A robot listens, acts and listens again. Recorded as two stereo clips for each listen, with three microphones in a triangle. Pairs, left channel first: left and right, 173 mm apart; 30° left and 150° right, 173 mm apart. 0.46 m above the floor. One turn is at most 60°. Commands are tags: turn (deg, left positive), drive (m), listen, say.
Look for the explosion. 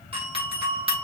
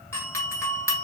<listen/>
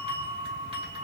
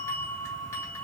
<listen/>
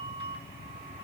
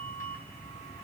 <say>I can't make out an explosion to turn to.</say>